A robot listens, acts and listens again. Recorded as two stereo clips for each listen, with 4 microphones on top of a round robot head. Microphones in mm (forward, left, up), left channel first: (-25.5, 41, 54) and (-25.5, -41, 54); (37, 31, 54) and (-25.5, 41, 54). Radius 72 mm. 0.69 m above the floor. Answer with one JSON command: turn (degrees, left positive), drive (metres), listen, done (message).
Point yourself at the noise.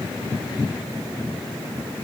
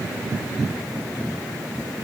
{"listen": true}
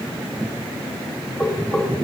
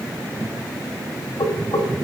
{"done": "Found it: knocking, straight ahead, 1 to 2 m away."}